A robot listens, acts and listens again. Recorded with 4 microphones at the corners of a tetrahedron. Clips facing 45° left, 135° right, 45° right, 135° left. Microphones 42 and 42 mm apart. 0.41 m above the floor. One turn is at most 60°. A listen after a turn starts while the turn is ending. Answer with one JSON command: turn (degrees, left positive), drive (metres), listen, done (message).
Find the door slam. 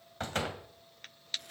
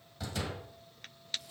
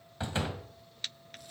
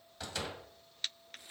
{"turn": 10}
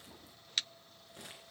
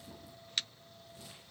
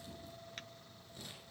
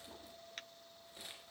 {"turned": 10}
{"done": "I heard a door slam from this way, but can't make it out now."}